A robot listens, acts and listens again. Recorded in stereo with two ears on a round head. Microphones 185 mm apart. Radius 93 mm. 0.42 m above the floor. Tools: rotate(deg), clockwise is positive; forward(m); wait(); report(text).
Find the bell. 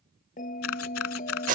rotate(-40)
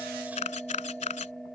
report("Facing the bell.")